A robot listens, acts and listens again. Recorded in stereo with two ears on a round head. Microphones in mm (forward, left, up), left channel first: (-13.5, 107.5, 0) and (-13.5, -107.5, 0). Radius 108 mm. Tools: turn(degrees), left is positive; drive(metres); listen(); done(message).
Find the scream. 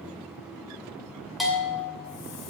listen()
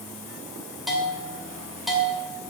listen()
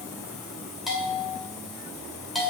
done("I can't make out a scream to turn to.")